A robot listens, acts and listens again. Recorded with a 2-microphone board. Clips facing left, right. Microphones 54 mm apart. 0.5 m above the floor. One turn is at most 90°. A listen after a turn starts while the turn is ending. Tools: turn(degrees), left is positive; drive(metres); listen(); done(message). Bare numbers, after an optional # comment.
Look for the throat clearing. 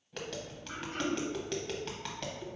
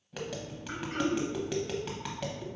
# The throat clearing: about 60° right or 120° right.
turn(-60)
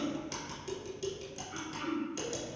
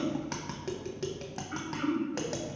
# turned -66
# So it is at 50° right.
turn(-50)
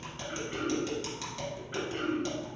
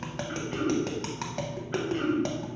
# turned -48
done("Facing the throat clearing.")